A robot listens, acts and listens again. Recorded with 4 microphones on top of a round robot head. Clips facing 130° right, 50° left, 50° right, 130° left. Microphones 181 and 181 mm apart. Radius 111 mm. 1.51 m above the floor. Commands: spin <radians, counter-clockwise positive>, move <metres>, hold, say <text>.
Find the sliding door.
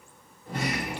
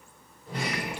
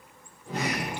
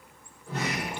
spin -1.40
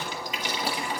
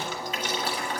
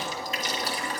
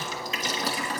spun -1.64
spin 0.17
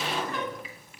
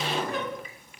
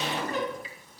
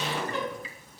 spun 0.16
say Facing the sliding door.